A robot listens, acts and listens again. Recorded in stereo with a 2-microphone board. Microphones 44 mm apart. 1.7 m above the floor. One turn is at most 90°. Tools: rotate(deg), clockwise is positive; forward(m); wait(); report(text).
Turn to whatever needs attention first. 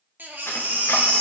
rotate(45)
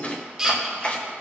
rotate(15)
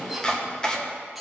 wait()
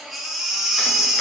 report("Found it: a baby crying, straight ahead, 1 to 2 m away.")